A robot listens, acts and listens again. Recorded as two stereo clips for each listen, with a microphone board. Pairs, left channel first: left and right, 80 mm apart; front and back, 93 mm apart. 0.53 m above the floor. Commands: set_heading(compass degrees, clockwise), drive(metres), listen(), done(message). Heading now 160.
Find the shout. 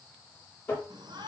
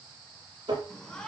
set_heading(240)
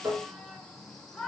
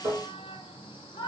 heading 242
done("Facing the shout.")